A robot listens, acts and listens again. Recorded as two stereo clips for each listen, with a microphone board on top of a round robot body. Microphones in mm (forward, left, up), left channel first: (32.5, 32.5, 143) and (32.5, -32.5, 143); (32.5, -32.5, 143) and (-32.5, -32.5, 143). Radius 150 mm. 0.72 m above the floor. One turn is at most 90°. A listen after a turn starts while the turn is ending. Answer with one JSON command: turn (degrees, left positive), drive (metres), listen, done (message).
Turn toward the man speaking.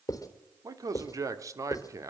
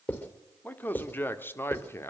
{"turn": -50}
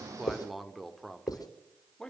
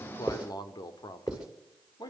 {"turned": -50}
{"turn": 10}
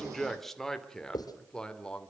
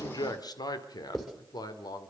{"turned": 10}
{"turn": 15}
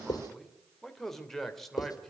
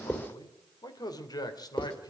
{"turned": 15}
{"done": "Facing the man speaking, 2 to 4 m away."}